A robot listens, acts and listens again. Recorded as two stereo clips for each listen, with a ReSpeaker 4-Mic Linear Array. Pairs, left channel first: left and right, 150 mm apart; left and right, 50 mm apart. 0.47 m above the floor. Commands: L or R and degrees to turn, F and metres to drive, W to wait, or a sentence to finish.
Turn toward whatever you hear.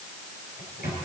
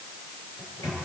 L90
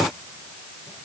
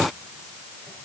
W
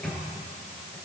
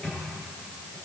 L10
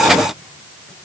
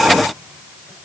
W
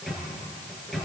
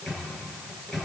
Facing the microwave, over 4 m away.